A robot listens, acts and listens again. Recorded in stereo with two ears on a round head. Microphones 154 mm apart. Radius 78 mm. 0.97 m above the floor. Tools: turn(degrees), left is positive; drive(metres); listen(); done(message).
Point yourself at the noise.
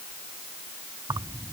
turn(degrees=-25)
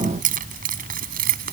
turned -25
turn(degrees=-120)
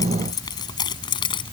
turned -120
turn(degrees=30)
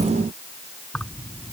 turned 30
done("Facing the keys jangling.")